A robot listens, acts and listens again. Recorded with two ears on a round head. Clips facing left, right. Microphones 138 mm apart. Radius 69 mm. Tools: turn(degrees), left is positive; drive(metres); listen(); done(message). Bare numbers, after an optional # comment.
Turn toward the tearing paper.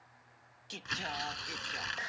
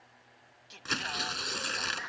# The tearing paper: about 60° right or 120° right.
turn(-60)
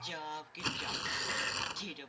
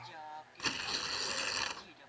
done("Found it: tearing paper, straight ahead.")